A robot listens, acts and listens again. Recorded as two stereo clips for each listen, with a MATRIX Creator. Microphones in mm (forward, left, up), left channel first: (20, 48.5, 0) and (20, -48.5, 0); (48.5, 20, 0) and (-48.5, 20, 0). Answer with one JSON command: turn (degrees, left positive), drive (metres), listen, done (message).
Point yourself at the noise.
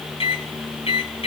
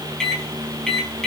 {"turn": 85}
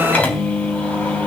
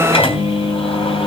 {"turn": 15}
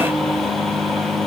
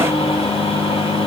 {"done": "Found it: a microwave, straight ahead."}